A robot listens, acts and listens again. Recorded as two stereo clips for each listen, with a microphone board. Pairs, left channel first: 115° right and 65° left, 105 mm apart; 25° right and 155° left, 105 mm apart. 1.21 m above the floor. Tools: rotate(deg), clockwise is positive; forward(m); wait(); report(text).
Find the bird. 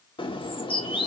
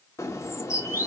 rotate(85)
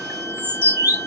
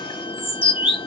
report("Found it: a bird, straight ahead, 1 to 2 m away.")